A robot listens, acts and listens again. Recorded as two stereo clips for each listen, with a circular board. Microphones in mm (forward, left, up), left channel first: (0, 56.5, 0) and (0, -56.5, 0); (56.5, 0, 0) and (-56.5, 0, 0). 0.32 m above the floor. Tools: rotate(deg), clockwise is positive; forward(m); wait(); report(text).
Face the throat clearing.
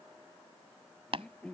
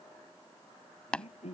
rotate(-10)
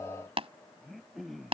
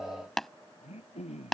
report("Found it: throat clearing, straight ahead.")